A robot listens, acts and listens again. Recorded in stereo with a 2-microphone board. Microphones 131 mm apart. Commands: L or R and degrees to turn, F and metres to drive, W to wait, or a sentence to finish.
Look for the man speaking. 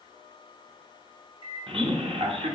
R50
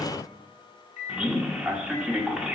R10
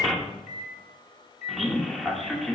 Facing the man speaking, 1 to 2 m away.